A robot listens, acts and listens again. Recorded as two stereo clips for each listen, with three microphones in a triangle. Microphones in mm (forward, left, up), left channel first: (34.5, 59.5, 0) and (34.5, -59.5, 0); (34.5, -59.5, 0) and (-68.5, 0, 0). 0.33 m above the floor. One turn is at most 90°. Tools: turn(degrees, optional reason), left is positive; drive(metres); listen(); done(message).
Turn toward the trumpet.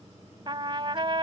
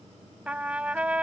turn(degrees=-90, reason="The trumpet: 130° right.")
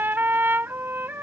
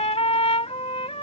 turn(degrees=-20, reason="The trumpet is now 20° right.")
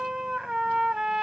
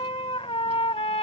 done("Found it: a trumpet, straight ahead.")